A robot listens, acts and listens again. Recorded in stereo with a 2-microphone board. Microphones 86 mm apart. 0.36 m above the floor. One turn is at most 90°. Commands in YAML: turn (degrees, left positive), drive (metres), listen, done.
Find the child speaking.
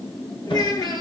turn: 45
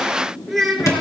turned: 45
done: "Found it: a child speaking, straight ahead."